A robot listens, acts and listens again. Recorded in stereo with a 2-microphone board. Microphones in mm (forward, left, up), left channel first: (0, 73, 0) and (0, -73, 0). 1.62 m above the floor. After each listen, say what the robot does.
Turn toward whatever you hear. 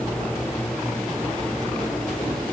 Keep listening.
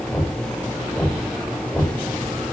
Turn 30° left.
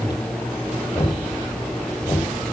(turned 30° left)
Turn 145° left.
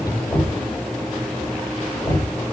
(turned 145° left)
Turn 30° left.
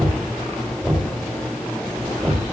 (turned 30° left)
Facing the knocking.